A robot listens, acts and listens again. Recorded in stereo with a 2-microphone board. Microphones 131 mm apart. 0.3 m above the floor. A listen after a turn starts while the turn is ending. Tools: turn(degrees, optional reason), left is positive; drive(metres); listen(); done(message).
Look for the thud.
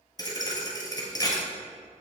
turn(degrees=30, reason="The thud: about 30° left or 150° left.")
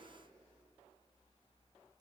listen()
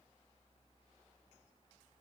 done("I heard a thud, but can't make it out now. It was about straight ahead or 120° left.")